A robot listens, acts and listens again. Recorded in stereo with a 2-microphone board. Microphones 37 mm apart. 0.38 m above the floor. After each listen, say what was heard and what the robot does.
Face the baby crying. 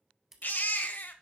The baby crying: about 60° left or 120° left. Turn 60° left.
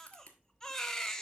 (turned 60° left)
So it is at 20° left. Turn 20° left.
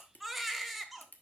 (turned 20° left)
Facing the baby crying.